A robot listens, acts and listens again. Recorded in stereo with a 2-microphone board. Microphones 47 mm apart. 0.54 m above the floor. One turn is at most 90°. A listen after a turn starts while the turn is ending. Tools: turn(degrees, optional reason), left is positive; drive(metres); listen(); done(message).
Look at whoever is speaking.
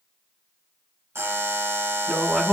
turn(degrees=30)
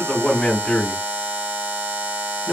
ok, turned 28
turn(degrees=90, reason="So it is at 150° left.")
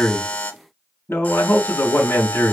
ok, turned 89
turn(degrees=60, reason="The man speaking is now 60° left.")
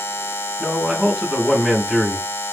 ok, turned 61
done("Found it: a man speaking, straight ahead.")